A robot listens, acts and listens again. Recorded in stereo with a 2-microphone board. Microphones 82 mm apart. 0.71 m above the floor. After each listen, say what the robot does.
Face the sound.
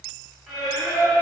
Turn 30° left.
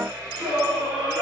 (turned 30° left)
Turn 20° right.
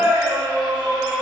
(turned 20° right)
Found it: singing, straight ahead.